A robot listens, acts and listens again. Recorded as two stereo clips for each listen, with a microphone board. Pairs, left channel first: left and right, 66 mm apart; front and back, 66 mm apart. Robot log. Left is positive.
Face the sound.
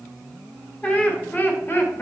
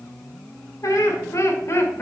note: The laughter: 45° left.
cmd yaw +45
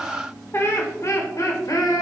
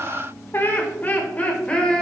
note: The laughter is now 75° left.
cmd yaw +75
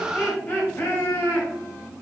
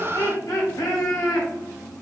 note: The laughter is now 35° left.
cmd yaw +35
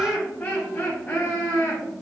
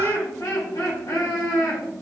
note: The laughter is now 25° left.
cmd yaw +25
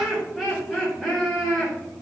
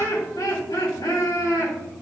end: Facing the laughter.